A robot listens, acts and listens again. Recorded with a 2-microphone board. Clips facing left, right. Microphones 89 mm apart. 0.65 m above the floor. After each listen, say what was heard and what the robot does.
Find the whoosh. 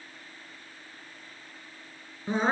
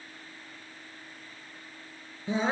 Keep listening.
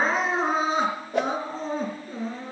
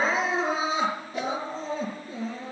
The whoosh: about 70° left or 110° left. Turn 70° left.
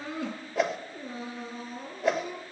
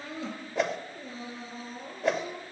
Facing the whoosh.